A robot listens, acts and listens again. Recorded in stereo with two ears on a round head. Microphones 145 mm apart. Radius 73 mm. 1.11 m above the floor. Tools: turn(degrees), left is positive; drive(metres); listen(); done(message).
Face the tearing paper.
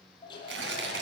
turn(degrees=-90)
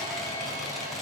listen()
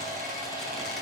listen()
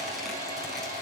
done("I heard tearing paper from this way, but can't make it out now.")